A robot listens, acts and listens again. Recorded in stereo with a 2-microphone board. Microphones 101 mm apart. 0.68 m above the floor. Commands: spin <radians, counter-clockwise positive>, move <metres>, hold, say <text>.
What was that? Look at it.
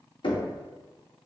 spin 0.96
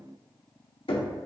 spin 1.22
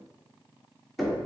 say Found it: knocking, straight ahead.